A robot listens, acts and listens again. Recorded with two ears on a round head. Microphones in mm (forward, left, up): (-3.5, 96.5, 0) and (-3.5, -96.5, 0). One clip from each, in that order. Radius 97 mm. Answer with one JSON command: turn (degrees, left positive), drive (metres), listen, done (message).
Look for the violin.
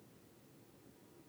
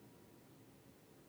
{"listen": true}
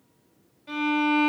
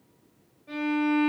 {"turn": 65}
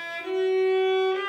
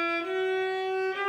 {"done": "Found it: a violin, straight ahead."}